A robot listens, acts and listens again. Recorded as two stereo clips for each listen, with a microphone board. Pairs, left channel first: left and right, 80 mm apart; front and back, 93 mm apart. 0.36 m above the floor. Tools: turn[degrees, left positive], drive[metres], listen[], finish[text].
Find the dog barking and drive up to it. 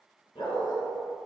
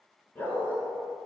Thought: The dog barking: 70° left.
Action: turn[70]
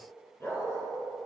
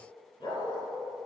Thought: The dog barking is now 35° left.
Action: turn[35]
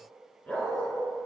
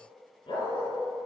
Thought: The dog barking is now 15° left.
Action: turn[15]
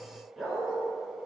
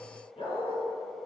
Action: drive[1.0]
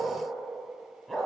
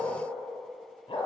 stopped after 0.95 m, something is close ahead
Action: finish[I am next to the dog barking.]